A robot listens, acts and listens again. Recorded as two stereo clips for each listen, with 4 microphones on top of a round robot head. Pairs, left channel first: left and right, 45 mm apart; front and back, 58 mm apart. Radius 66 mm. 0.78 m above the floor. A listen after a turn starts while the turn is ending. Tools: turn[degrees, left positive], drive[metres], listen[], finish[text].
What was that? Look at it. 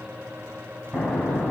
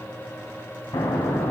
Thought: The explosion: 15° right.
Action: turn[-15]
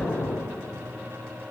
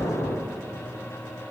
Action: finish[Found it: an explosion, straight ahead, 2 to 4 m away.]